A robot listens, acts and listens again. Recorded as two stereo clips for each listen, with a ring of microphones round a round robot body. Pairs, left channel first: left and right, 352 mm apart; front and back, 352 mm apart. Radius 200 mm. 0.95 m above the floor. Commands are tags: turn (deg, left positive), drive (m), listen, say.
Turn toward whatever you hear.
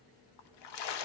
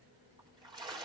<turn deg="100"/>
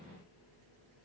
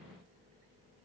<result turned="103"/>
<say>Facing where the splash came from. I can't hear it now.</say>